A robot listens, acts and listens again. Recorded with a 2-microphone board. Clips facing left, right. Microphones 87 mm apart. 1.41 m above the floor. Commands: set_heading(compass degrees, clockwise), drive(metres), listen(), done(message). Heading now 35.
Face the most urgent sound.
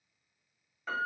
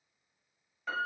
listen()
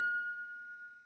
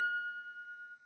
listen()
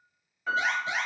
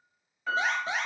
set_heading(70)
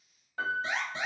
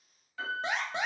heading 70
set_heading(180)
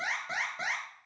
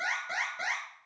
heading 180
done("Facing the alarm, under 1 m away.")